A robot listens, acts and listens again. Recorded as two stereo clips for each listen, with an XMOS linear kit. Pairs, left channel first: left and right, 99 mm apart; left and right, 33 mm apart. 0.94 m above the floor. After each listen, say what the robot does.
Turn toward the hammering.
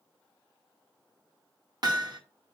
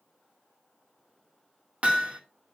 Turn 45° right.
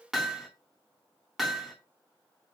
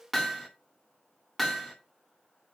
Found it: hammering, straight ahead, 1 to 2 m away.